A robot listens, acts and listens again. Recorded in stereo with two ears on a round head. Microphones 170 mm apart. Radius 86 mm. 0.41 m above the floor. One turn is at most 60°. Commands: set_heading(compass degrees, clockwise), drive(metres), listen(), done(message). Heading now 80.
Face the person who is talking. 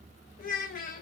set_heading(35)
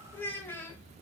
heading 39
set_heading(29)
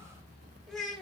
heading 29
done("Facing the child speaking, under 1 m away.")